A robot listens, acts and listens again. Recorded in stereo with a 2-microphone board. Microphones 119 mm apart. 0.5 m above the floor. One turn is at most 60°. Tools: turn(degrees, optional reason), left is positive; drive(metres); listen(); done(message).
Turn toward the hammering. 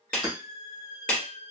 turn(degrees=-35, reason="The hammering: about 35° right or 145° right.")
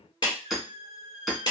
done("Found it: hammering, straight ahead, 1 to 2 m away.")